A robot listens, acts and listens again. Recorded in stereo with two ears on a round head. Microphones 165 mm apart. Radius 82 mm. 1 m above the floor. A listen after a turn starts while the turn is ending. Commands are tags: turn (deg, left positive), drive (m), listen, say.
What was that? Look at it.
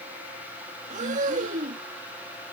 <turn deg="-40"/>
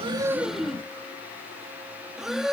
<say>Facing the breathing.</say>